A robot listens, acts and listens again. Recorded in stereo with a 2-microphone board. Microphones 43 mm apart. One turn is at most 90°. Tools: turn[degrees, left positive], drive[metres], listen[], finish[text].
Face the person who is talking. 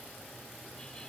Action: listen[]
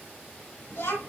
Action: turn[90]
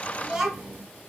Action: finish[Facing the child speaking.]